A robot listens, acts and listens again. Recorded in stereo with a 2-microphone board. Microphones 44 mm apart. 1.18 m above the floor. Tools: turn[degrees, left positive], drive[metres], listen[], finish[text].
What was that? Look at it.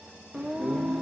Action: turn[-30]
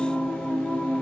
Thought: So it is at 20° left.
Action: turn[20]
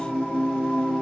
Thought: The singing is now 10° left.
Action: turn[10]
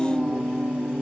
Action: finish[Found it: singing, straight ahead, under 1 m away.]